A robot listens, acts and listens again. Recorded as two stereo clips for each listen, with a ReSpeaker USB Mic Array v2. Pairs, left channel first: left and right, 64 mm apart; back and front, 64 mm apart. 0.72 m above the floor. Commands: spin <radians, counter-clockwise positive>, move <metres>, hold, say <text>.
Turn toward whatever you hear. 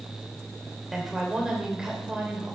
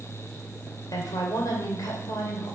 spin -2.88
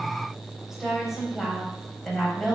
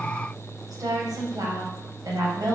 say Facing the woman speaking.